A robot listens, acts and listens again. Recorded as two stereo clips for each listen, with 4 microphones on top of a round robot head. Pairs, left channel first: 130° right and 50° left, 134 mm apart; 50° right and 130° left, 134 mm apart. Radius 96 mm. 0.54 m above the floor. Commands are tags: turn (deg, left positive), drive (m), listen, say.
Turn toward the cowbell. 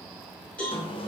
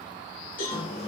<turn deg="-50"/>
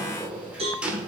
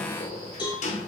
<say>Facing the cowbell.</say>